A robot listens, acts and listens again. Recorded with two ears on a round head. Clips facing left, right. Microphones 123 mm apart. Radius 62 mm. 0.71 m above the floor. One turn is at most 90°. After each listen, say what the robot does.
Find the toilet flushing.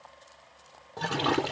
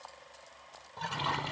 Turn 60° left.
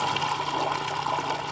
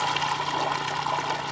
Facing the toilet flushing.